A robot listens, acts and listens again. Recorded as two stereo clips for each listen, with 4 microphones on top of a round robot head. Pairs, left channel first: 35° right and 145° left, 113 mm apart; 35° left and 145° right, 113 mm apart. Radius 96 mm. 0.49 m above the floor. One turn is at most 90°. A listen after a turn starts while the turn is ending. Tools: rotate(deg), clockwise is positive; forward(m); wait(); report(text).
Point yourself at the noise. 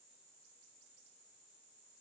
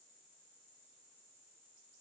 wait()
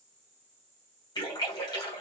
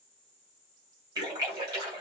rotate(90)
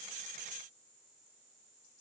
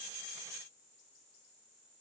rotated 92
report("I heard a splash from this way, but can't make it out now.")